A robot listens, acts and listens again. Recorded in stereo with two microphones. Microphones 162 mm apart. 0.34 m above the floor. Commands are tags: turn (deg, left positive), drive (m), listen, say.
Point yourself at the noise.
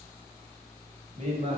<turn deg="-40"/>
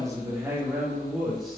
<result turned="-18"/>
<say>Facing the man speaking.</say>